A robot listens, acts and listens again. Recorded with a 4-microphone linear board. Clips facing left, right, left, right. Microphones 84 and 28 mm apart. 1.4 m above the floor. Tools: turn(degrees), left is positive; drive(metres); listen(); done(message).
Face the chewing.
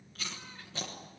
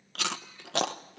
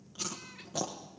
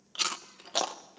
turn(degrees=-90)
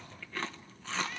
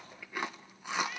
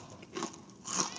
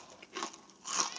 turn(degrees=-15)
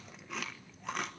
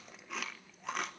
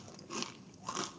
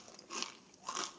done("Found it: chewing, straight ahead, 1 to 2 m away.")